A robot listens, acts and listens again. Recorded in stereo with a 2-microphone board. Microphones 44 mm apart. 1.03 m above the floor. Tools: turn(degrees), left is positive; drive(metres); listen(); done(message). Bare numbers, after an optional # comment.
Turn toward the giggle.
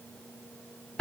listen()
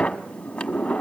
listen()
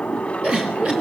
# The giggle: about 25° right or 155° right.
turn(-25)
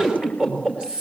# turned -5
# The giggle: about 20° right or 160° right.
turn(-20)
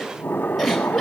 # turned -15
done("Found it: a giggle, straight ahead.")